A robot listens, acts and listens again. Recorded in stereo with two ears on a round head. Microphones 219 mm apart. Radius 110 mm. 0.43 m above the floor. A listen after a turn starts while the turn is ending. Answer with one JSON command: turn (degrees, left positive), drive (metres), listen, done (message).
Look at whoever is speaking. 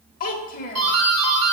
{"turn": 35}
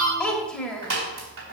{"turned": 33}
{"done": "Facing the child speaking."}